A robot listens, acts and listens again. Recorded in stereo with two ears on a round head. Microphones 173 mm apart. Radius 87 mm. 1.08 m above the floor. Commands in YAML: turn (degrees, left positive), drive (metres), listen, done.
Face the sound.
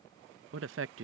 turn: -75
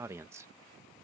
turn: -15
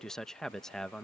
done: "Facing the man speaking."